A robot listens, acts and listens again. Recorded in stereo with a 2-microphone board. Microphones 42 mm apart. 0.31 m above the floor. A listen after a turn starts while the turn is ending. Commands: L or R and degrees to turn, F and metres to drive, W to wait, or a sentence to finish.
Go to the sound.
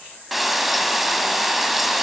R30
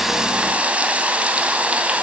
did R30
R140
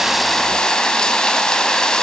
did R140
L20
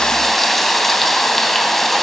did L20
F1.0
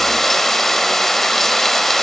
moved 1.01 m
L10
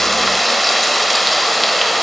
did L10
F1.0
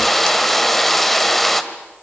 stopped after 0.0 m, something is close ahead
L10
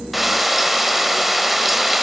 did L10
Arrived at the frying, straight ahead.